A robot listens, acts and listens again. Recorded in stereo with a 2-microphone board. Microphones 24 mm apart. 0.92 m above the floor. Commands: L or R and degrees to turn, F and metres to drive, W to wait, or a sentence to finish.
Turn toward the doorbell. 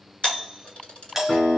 R30
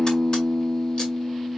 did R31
W
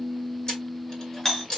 L20
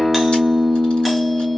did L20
W
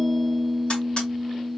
W
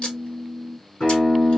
I heard a doorbell from this way, but can't make it out now.